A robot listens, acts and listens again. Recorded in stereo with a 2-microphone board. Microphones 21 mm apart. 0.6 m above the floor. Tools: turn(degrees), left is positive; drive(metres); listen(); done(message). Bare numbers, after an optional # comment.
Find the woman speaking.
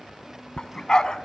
listen()
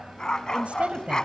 # The woman speaking: about 65° right or 115° right.
turn(-65)
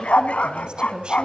# So it is at 45° right.
turn(-45)
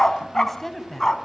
# The woman speaking is now 10° left.
turn(10)
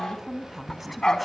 done("Facing the woman speaking, over 4 m away.")